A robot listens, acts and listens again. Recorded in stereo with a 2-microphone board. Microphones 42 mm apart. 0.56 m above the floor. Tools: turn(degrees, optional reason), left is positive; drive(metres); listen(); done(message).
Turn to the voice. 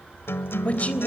turn(degrees=35, reason="The woman speaking: about 35° left or 145° left.")
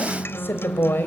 turn(degrees=110, reason="So it is at 110° left.")
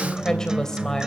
turn(degrees=15, reason="The woman speaking is now 15° left.")
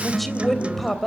done("Found it: a woman speaking, straight ahead, 2 to 4 m away.")